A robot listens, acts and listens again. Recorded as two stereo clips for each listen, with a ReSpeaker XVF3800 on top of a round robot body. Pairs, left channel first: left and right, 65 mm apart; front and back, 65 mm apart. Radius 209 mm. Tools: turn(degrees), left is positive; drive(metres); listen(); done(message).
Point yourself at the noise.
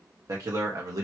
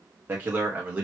turn(degrees=-115)
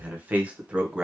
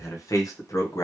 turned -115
turn(degrees=-15)
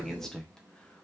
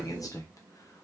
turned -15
turn(degrees=10)
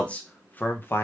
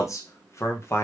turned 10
turn(degrees=40)
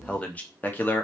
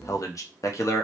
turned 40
turn(degrees=35)
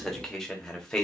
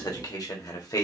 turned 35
turn(degrees=10)
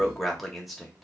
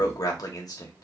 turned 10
done("Found it: a man speaking, straight ahead, 1 to 2 m away.")